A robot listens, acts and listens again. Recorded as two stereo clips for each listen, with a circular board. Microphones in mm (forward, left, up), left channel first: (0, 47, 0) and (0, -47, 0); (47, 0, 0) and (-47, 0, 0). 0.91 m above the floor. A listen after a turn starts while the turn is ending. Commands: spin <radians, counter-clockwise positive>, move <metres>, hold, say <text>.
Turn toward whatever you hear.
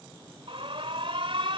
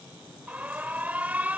spin -1.83
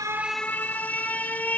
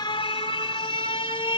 spin 0.35
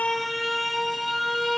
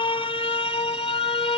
say Facing the alarm.